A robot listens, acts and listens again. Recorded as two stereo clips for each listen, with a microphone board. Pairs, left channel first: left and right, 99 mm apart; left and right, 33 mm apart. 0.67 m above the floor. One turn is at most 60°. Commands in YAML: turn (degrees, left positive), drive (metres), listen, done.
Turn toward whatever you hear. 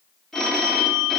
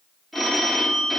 turn: 30
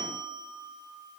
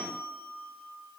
turn: 60
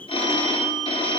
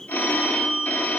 turn: 60
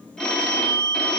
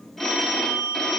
turn: 10
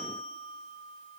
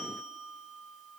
done: "Found it: a phone ringing, straight ahead."